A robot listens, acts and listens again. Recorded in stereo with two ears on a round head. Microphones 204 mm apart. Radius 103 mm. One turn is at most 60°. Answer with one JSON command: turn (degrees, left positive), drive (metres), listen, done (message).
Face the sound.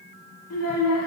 {"turn": 60}
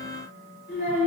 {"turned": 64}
{"turn": 45}
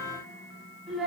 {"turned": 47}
{"done": "Found it: a child speaking, straight ahead."}